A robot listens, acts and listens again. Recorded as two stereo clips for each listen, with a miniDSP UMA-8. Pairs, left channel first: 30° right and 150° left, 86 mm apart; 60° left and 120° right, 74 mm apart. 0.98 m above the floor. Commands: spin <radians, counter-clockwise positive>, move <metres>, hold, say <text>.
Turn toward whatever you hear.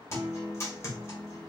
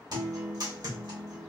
spin -1.48
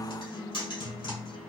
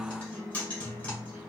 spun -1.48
spin -0.17
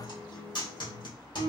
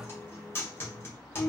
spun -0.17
say Facing the guitar, 1 to 2 m away.